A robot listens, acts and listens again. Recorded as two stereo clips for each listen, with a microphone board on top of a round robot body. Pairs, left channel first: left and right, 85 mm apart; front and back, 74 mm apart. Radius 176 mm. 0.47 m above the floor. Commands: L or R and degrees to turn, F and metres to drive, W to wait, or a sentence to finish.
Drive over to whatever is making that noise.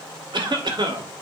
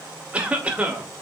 R110
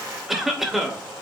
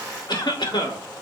F1.0
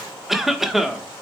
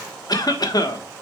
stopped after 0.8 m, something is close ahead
I am next to the cough.